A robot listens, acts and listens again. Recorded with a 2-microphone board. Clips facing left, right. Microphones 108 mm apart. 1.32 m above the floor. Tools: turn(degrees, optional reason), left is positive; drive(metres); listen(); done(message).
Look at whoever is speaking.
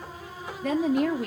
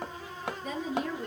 turn(degrees=70, reason="The woman speaking: about 70° left or 110° left.")
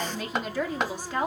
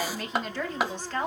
turn(degrees=15, reason="So it is at 15° left.")
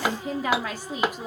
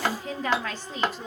turn(degrees=15, reason="The woman speaking is now 15° left.")
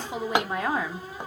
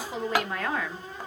turn(degrees=20, reason="The woman speaking is now 20° left.")
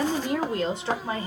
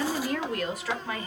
turn(degrees=25, reason="The woman speaking is now 25° left.")
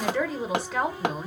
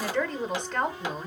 done("Found it: a woman speaking, straight ahead, 1 to 2 m away.")